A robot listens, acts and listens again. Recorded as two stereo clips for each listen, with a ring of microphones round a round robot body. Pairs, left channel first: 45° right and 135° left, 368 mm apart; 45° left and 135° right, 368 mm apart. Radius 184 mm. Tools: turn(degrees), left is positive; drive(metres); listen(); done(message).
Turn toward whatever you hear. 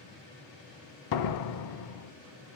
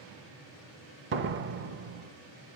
turn(degrees=-80)
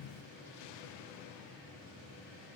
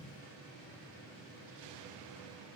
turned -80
done("I heard a door slam from this way, but can't make it out now.")